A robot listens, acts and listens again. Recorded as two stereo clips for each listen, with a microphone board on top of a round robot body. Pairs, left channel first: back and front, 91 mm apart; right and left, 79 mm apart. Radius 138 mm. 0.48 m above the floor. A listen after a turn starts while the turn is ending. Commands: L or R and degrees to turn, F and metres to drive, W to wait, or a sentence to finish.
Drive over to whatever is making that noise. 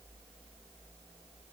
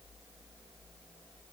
W
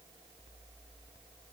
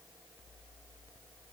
W
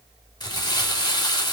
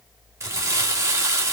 L140
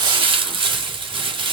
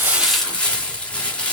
R15
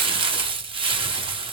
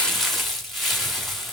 F1.0
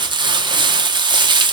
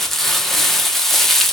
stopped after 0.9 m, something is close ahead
I am next to the crumpling.